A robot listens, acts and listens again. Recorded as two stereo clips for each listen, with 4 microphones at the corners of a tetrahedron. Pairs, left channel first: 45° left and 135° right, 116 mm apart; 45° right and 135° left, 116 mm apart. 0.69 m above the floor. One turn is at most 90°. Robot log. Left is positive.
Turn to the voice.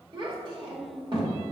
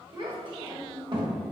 note: The child speaking: straight behind.
cmd yaw +90
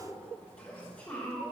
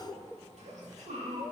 note: The child speaking is now 125° left.
cmd yaw +90
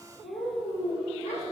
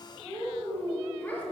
note: The child speaking is now 25° left.
cmd yaw +25
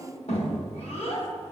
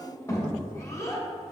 note: The child speaking is now 15° left.
cmd yaw +15
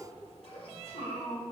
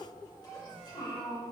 end: Found it: a child speaking, straight ahead, 1 to 2 m away.